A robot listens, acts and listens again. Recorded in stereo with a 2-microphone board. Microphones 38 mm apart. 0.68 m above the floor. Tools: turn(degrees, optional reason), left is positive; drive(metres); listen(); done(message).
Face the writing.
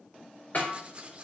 turn(degrees=-30, reason="The writing: about 30° right or 150° right.")
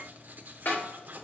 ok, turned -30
turn(degrees=-115, reason="So it is at 115° right.")
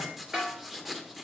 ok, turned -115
done("Facing the writing, 1 to 2 m away.")